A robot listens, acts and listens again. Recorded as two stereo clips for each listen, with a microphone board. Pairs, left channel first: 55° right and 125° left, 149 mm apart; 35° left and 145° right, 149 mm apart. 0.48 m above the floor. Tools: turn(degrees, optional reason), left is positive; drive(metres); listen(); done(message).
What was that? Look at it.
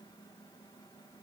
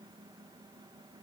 listen()
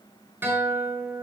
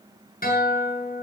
turn(degrees=50, reason="The guitar: 50° left.")
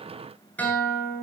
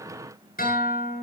turn(degrees=25, reason="The guitar is now 25° left.")
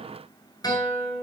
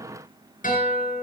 turn(degrees=10, reason="The guitar is now 10° left.")
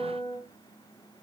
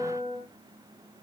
done("Found it: a guitar, straight ahead, over 4 m away.")